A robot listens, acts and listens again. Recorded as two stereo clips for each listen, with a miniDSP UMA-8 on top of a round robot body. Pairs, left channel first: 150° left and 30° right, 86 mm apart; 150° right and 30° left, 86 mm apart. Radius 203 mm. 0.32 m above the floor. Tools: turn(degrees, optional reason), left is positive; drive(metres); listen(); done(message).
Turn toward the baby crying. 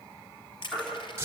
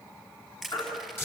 turn(degrees=-140, reason="The baby crying: 140° right.")
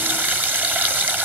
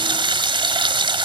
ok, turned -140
listen()
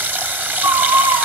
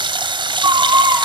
turn(degrees=-10, reason="The baby crying is now 10° right.")
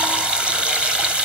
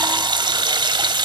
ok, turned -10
listen()
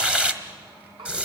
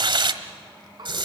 listen()
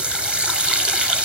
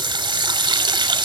done("I heard a baby crying from this way, but can't make it out now.")